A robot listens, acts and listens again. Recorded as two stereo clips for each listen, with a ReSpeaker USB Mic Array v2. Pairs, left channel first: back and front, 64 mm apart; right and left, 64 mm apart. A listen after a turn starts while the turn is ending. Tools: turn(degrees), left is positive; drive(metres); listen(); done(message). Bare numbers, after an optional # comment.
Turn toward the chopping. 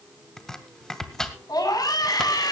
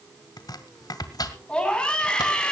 # The chopping: 100° right.
turn(-100)
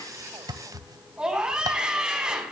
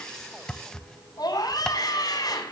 # The chopping is now 10° right.
turn(-10)
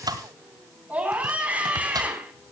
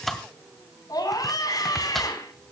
done("Found it: chopping, straight ahead.")